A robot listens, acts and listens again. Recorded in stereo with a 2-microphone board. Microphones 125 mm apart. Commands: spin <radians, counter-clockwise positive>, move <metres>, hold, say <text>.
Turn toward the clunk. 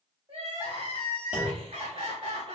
spin -0.52
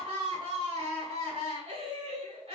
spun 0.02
hold
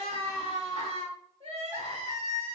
say I heard a clunk, but can't make it out now. It was about 10° right or 170° right.